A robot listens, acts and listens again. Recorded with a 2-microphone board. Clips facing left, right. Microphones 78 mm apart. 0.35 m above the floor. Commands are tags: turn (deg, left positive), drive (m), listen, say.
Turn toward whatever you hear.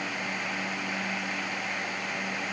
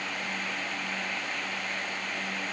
<listen/>
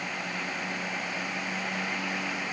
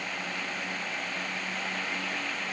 <listen/>
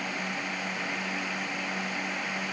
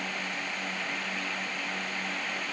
<say>I can't make out anything to turn to.</say>